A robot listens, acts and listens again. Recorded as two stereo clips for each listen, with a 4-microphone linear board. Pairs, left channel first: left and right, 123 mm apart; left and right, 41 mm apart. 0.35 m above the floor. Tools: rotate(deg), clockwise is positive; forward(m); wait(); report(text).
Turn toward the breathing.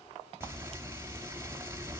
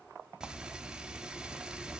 wait()
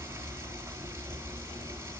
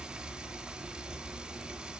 wait()
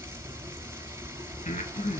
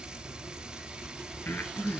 rotate(-90)
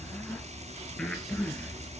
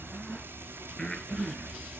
rotate(-10)
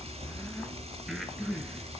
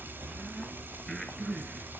report("Found it: breathing, straight ahead, over 4 m away.")